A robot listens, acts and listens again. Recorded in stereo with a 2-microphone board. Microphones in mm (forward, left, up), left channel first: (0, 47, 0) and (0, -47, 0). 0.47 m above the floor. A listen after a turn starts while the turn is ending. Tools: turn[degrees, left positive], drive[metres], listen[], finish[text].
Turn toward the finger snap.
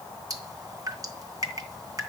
Action: listen[]
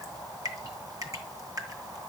Action: listen[]
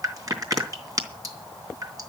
Action: finish[I can't make out a finger snap, only dripping.]